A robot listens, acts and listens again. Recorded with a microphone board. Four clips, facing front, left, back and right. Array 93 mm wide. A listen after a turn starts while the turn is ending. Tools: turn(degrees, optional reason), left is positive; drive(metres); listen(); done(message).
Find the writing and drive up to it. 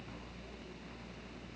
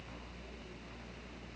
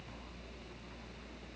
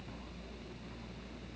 listen()
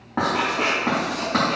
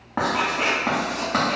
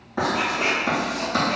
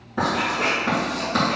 turn(degrees=55, reason="The writing: 55° left.")
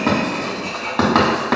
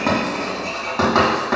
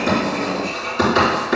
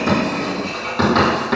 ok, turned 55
turn(degrees=15, reason="The writing is now 15° left.")
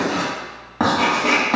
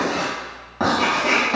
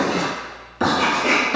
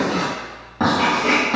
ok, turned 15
drive(metres=1.0)
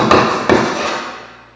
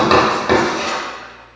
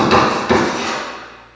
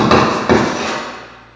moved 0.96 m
turn(degrees=-10, reason="The writing is now 10° right.")
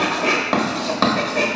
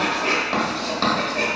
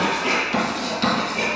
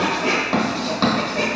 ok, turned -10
drive(metres=1.0)
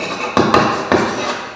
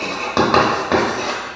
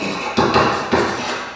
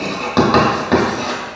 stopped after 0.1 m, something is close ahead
done("Arrived at the writing, straight ahead.")